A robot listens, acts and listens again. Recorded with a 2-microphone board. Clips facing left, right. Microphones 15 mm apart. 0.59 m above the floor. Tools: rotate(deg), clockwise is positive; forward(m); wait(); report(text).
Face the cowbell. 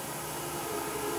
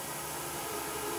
wait()
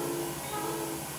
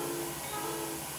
wait()
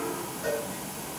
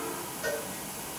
rotate(25)
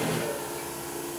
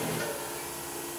wait()
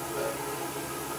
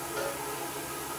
wait()
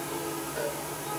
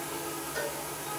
rotate(130)
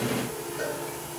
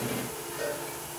rotate(15)
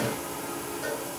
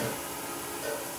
wait()
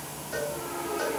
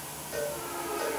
report("Facing the cowbell.")